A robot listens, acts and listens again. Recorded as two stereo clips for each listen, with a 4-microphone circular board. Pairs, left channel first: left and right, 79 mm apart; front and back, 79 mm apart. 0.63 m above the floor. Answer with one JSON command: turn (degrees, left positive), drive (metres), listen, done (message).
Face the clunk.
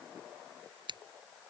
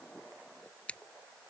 {"listen": true}
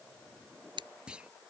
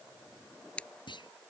{"turn": -10}
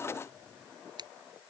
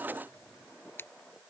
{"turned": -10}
{"done": "I heard a clunk from this way, but can't make it out now."}